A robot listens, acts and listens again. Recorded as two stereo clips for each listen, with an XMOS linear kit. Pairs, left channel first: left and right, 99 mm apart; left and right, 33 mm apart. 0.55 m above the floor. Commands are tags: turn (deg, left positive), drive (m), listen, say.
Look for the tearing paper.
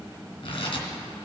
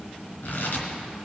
<turn deg="55"/>
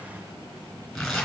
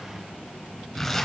<say>Facing the tearing paper.</say>